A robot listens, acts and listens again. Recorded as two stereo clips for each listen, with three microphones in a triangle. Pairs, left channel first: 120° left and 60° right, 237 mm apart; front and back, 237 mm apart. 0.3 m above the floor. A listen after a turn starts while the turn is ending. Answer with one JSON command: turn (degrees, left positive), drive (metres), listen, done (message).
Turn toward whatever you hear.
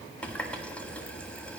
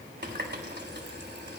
{"turn": -155}
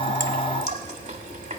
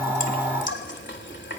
{"turn": -10}
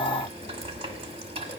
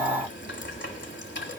{"done": "Found it: a running tap, straight ahead, 1 to 2 m away."}